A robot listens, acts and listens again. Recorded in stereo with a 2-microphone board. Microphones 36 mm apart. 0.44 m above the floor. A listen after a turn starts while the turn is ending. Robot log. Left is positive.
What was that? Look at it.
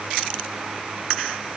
cmd idle
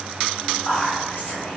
note: The whispering: about 40° left or 140° left.
cmd yaw +40
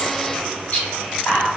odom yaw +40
note: So it is at 90° left.
cmd yaw +90
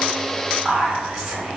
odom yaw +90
end: Found it: whispering, straight ahead, 1 to 2 m away.